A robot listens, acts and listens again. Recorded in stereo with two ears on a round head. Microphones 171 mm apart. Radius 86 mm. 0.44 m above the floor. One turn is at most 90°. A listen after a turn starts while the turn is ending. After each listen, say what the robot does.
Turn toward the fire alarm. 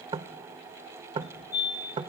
Turn 55° left.
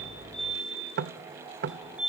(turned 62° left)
Facing the fire alarm.